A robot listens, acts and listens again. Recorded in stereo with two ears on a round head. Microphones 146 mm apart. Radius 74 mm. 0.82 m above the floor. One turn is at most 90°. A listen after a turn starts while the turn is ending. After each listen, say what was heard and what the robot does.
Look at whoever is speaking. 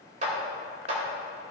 Keep listening.
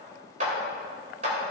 Keep listening.
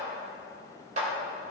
I can't make out anyone speaking, only a clap.